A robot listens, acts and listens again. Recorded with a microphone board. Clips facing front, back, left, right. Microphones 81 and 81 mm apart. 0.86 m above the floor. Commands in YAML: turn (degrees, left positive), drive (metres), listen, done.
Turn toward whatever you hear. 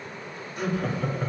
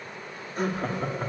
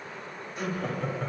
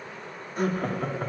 turn: -130
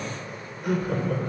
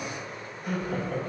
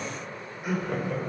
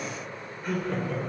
turn: 15
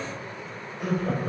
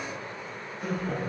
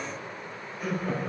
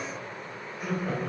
done: "Found it: laughter, straight ahead."